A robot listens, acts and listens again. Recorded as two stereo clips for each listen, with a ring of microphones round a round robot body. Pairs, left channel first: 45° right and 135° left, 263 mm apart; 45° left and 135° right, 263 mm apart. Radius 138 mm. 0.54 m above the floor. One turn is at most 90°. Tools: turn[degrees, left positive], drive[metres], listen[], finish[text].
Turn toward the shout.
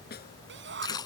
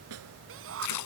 Thought: The shout: 175° right.
Action: turn[-90]
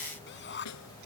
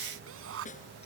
Thought: The shout is now 95° right.
Action: turn[-90]
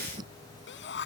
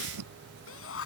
Action: finish[Facing the shout.]